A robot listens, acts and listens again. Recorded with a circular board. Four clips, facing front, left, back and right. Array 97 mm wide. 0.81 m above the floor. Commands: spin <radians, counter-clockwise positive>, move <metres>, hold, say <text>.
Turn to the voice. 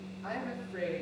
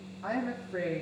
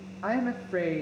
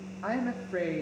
spin -2.79
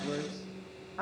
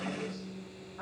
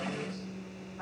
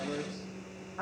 spin -0.52
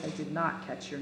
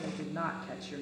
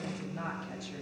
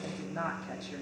say Facing the woman speaking.